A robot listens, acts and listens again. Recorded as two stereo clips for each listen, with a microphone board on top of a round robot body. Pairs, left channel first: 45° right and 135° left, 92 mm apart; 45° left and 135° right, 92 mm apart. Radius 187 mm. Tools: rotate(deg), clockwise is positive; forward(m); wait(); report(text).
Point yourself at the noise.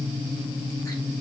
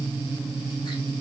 wait()
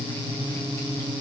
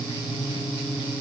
wait()
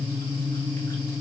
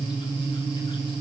report("I can't make out anything to turn to.")